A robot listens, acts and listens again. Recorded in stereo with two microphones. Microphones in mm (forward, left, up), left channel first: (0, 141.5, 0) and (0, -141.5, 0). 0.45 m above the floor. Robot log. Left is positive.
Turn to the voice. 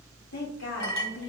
note: The woman speaking: about 60° left or 120° left.
cmd yaw +60
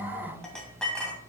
cmd idle
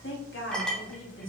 note: So it is at 50° left.
cmd yaw +50
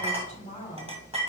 note: The woman speaking is now 25° left.
cmd yaw +25
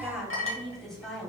end: Facing the woman speaking, 2 to 4 m away.